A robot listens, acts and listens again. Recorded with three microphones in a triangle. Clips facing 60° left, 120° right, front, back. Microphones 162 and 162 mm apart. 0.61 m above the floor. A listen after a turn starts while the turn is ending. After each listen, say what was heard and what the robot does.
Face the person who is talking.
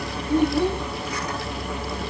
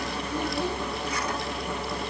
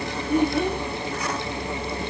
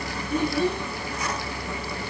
The child speaking: 35° left. Turn 35° left.
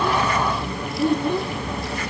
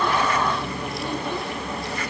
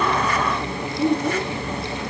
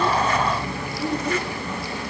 The child speaking is now 15° left. Turn 15° left.
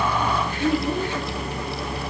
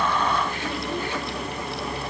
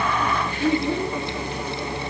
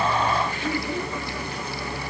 Facing the child speaking, 2 to 4 m away.